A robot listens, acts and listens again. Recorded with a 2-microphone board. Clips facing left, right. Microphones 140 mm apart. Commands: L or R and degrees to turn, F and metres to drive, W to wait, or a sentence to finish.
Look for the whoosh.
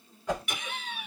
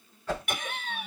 L15
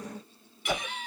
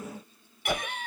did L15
Facing the whoosh.